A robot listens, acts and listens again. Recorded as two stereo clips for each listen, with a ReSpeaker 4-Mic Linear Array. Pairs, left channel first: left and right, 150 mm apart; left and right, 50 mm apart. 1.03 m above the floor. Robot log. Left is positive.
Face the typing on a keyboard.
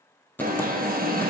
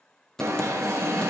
cmd yaw +30
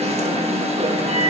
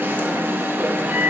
cmd idle
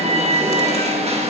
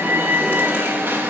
cmd idle
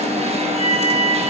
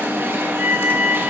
end: I heard typing on a keyboard, but can't make it out now. It was about 20° right or 140° left.